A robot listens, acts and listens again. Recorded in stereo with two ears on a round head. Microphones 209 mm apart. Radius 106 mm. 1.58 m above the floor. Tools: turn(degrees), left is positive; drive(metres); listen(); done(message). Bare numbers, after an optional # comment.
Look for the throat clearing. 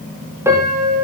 listen()
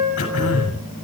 # The throat clearing: about 60° left or 120° left.
turn(60)
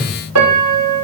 done("Found it: throat clearing, straight ahead.")